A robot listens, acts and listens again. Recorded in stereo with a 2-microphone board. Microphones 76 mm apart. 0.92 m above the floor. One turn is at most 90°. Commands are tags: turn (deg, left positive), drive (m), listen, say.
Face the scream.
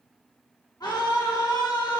<turn deg="60"/>
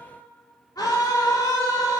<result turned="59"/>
<turn deg="55"/>
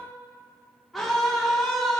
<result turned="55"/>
<say>Facing the scream, 1 to 2 m away.</say>